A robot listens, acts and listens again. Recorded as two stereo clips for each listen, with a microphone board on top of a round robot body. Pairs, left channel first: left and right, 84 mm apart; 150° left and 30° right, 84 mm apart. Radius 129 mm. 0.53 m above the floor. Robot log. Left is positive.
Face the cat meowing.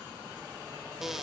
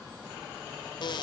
cmd idle
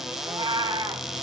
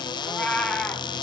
note: The cat meowing: 135° right.
cmd yaw -135
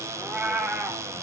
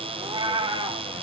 note: The cat meowing is now 15° right.
cmd yaw -15
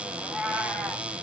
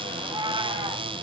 end: Found it: a cat meowing, straight ahead.